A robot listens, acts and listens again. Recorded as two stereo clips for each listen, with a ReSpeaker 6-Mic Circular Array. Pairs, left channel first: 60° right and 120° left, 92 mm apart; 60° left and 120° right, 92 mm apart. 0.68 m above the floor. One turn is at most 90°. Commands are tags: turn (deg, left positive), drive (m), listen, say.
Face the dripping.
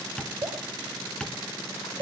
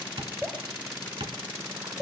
<turn deg="90"/>
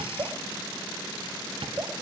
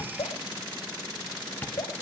<turn deg="75"/>
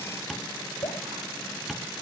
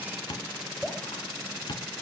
<turn deg="-25"/>
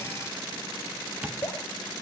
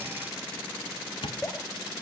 <turn deg="-10"/>
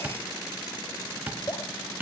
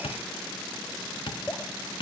<say>Facing the dripping, 2 to 4 m away.</say>